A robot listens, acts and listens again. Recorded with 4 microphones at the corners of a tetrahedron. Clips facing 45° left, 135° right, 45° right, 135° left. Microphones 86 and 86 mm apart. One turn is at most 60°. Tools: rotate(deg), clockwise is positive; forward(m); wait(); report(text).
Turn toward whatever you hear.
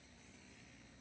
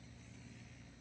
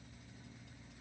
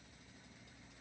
wait()
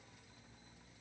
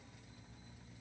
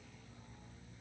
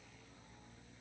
wait()
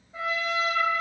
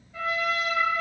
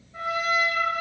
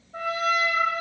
rotate(-60)
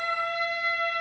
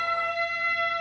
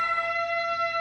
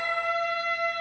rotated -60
rotate(-30)
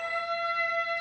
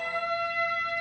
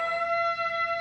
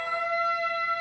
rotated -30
report("Facing the trumpet.")